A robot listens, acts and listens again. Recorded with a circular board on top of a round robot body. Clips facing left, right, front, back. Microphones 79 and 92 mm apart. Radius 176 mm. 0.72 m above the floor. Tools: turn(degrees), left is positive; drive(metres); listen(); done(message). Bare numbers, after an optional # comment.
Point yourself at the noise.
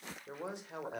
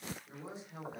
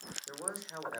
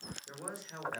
# The man speaking: 75° left.
turn(75)
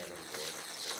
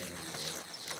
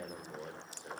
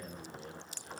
# The man speaking is now 30° left.
turn(30)
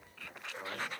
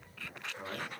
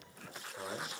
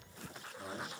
# The man speaking is now 10° left.
turn(10)
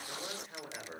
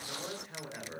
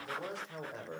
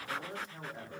done("Found it: a man speaking, straight ahead.")